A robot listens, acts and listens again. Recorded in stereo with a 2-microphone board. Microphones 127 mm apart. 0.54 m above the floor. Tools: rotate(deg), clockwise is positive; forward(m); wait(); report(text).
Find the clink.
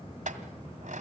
rotate(90)
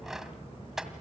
report("Found it: a clink, straight ahead, 2 to 4 m away.")